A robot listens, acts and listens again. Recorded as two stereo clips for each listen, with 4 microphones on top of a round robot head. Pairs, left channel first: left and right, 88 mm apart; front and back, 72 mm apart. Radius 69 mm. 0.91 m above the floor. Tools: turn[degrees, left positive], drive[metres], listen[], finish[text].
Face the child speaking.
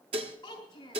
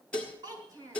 Thought: The child speaking: 145° left.
Action: turn[145]
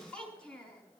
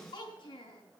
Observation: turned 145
Thought: The child speaking is now 10° left.
Action: turn[10]
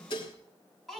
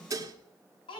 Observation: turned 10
Action: finish[Facing the child speaking.]